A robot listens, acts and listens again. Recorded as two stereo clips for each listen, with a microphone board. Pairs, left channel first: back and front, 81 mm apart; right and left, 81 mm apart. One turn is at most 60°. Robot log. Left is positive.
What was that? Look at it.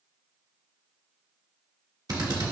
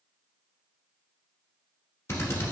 note: The drill: 35° right.
cmd yaw -35
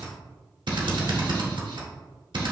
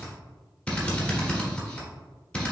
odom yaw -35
note: The drill is now 15° right.
cmd yaw -15
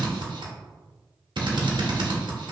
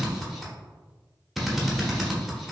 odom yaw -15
end: Found it: a drill, straight ahead.